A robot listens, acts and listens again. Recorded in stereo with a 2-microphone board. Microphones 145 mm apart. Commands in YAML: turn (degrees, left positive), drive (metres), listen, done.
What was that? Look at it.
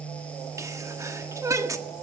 turn: -20
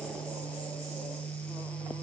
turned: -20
listen: true
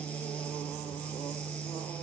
done: "I heard a sneeze, but can't make it out now. It was about straight ahead or 140° right."